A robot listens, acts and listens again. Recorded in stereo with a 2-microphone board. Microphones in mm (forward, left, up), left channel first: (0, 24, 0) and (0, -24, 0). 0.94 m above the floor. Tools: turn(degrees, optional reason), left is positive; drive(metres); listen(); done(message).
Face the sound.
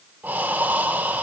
turn(degrees=-40, reason="The breathing: about 40° right or 140° right.")
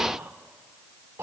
turn(degrees=-100, reason="So it is at 100° right.")
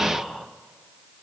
done("Found it: breathing, straight ahead.")